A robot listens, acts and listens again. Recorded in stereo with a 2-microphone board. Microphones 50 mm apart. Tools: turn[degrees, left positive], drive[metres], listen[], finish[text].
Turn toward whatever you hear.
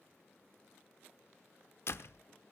Thought: The door slam: about 55° left or 125° left.
Action: turn[55]
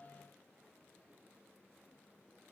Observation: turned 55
Action: listen[]
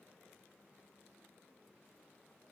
Action: finish[I heard a door slam, but can't make it out now. It was about straight ahead or 70° left.]